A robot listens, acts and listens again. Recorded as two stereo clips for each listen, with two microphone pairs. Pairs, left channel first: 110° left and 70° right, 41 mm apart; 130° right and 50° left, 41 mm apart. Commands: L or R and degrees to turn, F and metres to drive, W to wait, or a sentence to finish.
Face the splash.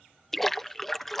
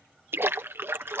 L30
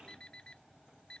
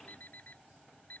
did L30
I heard a splash from this way, but can't make it out now.